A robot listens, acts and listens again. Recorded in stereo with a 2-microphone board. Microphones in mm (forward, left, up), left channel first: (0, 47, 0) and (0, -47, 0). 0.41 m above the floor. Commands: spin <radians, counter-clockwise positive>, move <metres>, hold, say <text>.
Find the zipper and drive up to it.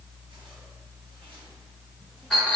hold
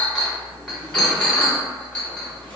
hold
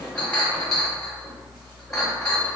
say I can't make out a zipper, only a clink.